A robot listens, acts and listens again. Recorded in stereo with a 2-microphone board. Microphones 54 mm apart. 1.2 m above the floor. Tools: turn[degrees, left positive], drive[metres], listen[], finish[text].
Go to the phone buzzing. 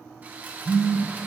Thought: The phone buzzing: about 50° left or 130° left.
Action: turn[50]
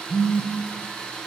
Thought: So it is at 80° left.
Action: turn[80]
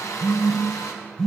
Action: drive[1.0]
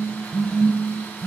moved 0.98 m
Thought: The phone buzzing is now 10° left.
Action: turn[10]
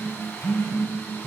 Action: drive[1.0]
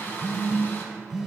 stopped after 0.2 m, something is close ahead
Action: finish[I am next to the phone buzzing.]